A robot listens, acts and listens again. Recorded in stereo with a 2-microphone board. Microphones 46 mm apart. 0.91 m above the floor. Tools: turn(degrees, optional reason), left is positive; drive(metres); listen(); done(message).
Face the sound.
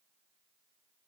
listen()
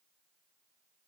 listen()
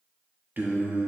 turn(degrees=-55, reason="The singing: about 55° right or 125° right.")
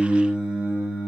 turn(degrees=-30, reason="So it is at 30° right.")
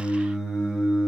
turn(degrees=-20, reason="The singing is now 20° right.")
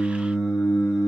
done("Found it: singing, straight ahead.")